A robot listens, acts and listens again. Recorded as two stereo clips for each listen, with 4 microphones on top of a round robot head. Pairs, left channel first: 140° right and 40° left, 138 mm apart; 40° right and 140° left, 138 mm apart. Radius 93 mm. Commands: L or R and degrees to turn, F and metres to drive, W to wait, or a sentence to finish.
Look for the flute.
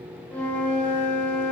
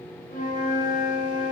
R65
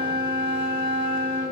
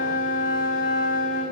R15
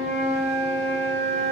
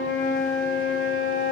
Facing the flute, 1 to 2 m away.